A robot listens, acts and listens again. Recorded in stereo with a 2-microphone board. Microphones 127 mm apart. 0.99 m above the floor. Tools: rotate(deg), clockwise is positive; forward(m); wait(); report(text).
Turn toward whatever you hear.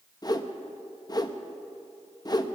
rotate(-30)
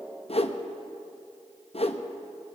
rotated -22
rotate(-130)
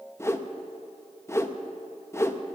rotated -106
rotate(-20)
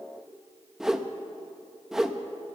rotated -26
report("Facing the whoosh.")